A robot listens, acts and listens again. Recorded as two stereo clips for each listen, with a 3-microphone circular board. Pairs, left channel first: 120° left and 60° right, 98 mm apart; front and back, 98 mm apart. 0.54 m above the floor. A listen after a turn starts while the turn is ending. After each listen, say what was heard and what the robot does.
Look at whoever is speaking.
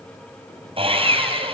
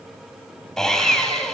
Keep listening.
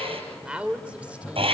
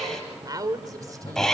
The woman speaking: 135° right. Turn 135° right.
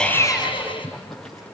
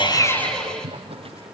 Keep listening.
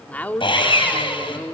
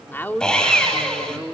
The woman speaking is now 80° left. Turn 80° left.
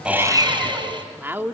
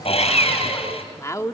The woman speaking is now 15° right. Turn 15° right.
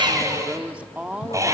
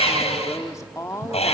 Found it: a woman speaking, straight ahead.